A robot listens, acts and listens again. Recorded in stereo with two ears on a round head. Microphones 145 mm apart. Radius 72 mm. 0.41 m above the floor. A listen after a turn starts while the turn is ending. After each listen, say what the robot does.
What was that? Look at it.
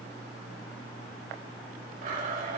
Turn 50° right.
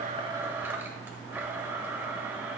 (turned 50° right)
Turn 15° right.
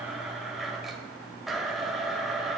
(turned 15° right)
Found it: a blender, straight ahead, 1 to 2 m away.